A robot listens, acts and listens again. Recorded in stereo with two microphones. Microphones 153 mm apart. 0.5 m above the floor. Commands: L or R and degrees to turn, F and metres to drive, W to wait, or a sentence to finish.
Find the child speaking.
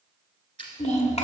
L45
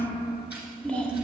L10
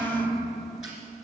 Facing the child speaking, 1 to 2 m away.